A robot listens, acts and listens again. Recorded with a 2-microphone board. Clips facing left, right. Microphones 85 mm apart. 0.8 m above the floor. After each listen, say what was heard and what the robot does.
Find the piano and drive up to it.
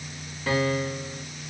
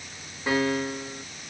The piano: about 15° right or 165° right. Turn 15° right.
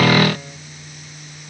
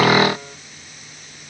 Keep listening.
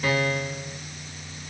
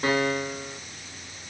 So it is at 150° right. Turn 150° right.
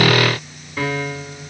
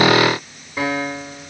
The piano is now 15° right. Turn 15° right.
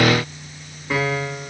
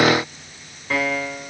Drive 1.0 m forward.
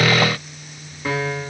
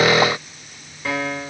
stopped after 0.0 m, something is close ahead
The piano is now 10° left. Turn 10° left.
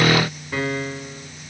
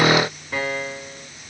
Blocked. The piano is further on, straight ahead.